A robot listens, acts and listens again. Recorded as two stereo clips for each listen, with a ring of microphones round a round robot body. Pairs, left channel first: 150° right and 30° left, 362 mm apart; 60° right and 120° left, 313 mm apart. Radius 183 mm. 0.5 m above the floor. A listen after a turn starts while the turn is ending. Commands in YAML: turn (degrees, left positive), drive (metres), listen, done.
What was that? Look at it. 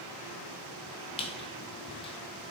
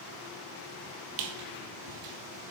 turn: 135
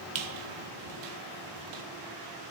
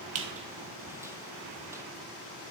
listen: true
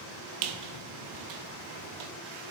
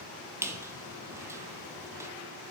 turn: 40
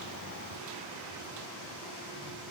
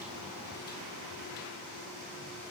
listen: true
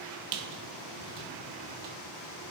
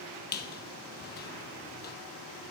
done: "Facing the squeak."